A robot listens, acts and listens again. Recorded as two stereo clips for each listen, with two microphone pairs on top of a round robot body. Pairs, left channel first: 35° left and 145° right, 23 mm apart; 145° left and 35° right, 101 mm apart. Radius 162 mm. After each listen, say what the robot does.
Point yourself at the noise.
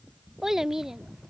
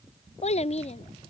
Turn 145° left.
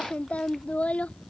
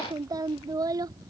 Turn 20° left.
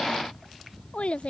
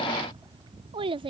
Found it: a child speaking, straight ahead.